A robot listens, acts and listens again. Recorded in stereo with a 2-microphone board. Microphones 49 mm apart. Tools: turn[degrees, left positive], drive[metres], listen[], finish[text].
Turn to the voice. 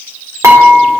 Action: listen[]
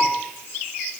Action: listen[]
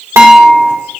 Action: finish[I can't make out anyone speaking, only dishes clattering.]